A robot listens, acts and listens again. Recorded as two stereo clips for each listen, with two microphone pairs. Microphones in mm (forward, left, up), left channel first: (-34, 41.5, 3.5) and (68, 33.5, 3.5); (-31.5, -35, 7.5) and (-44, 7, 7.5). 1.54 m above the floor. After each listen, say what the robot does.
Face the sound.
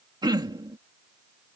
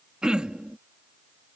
Turn 40° left.
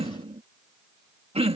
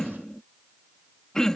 Facing the throat clearing.